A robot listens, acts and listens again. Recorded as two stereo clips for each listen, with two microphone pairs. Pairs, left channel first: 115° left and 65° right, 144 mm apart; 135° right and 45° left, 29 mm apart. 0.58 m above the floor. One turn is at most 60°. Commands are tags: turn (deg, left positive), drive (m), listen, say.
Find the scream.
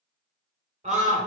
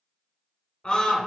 <turn deg="-60"/>
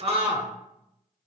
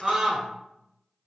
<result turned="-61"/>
<turn deg="-30"/>
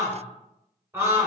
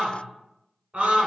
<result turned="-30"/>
<say>Found it: a scream, straight ahead, 1 to 2 m away.</say>